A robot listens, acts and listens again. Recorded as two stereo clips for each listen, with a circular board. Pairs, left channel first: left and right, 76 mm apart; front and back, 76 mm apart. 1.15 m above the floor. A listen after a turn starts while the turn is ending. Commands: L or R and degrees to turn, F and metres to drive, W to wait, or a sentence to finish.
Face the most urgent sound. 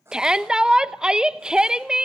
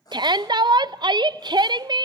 R170
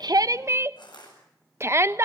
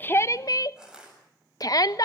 R35
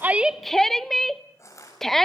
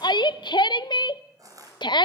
Found it: a shout, straight ahead.